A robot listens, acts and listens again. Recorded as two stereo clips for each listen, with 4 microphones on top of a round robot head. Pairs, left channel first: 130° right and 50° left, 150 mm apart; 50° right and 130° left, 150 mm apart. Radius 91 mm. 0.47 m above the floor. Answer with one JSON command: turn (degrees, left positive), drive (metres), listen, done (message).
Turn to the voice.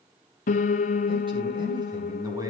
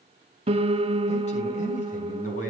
{"turn": -15}
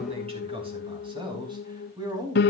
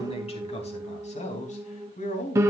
{"turn": -15}
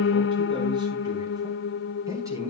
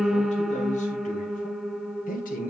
{"turn": -20}
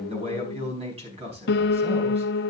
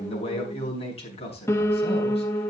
{"done": "Facing the man speaking, over 4 m away."}